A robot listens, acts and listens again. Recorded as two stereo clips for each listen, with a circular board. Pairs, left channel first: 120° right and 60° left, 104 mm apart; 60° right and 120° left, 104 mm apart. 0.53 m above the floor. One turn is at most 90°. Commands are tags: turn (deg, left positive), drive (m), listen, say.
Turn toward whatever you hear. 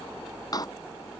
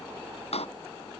<turn deg="-70"/>
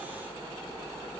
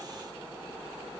<say>I heard a door slam from this way, but can't make it out now.</say>